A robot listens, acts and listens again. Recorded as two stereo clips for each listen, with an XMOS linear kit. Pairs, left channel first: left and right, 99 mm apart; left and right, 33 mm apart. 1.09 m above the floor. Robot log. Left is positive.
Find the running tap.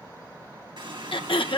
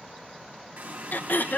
note: The running tap: about 50° right or 130° right.
cmd yaw -50
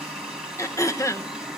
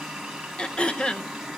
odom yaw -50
end: Found it: a running tap, straight ahead, over 4 m away.